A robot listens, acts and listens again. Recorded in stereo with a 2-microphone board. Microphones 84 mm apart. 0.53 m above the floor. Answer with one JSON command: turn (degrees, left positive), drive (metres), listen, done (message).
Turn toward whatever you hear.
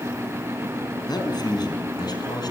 {"turn": 55}
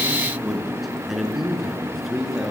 {"done": "Found it: a man speaking, straight ahead, over 4 m away."}